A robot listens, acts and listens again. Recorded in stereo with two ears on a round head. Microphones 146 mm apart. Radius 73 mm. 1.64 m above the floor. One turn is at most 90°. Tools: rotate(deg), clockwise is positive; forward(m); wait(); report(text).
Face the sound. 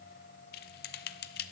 rotate(-65)
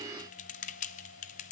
rotate(-45)
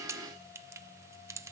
rotate(20)
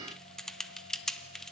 report("Found it: typing on a keyboard, straight ahead.")